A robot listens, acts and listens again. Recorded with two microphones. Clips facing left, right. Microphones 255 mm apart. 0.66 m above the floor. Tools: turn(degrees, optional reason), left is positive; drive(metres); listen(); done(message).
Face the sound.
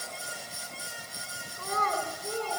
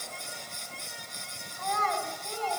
turn(degrees=50, reason="The child speaking: about 50° left or 130° left.")
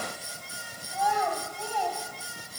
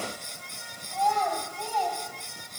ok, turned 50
turn(degrees=10, reason="So it is at 10° left.")
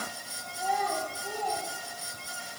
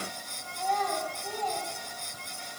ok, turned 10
turn(degrees=10, reason="The child speaking is now 10° left.")
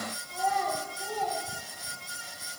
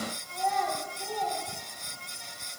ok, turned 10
done("Facing the child speaking.")